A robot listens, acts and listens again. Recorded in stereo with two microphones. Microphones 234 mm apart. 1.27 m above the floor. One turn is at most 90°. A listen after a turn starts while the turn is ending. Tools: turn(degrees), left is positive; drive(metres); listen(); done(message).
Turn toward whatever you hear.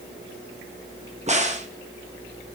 turn(degrees=-30)
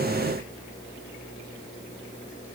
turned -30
listen()
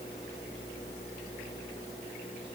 done("I heard a crack, but can't make it out now. It was about straight ahead or 120° right.")